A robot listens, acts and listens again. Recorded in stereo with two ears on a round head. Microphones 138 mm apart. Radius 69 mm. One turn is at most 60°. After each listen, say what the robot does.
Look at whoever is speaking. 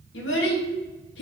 Turn 60° left.
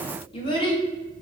Turn 30° left.
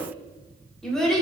Facing the child speaking, under 1 m away.